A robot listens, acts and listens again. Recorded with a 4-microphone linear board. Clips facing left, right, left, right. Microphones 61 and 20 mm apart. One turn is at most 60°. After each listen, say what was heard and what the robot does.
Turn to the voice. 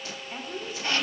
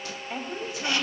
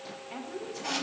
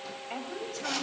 The woman speaking: about 75° right or 105° right. Turn 60° right.
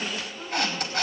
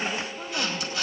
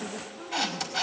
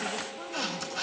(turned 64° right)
Keep listening.
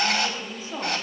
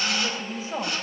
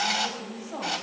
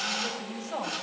So it is at 30° right. Turn 30° right.
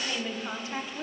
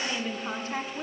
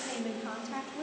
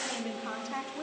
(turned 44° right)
Facing the woman speaking, 2 to 4 m away.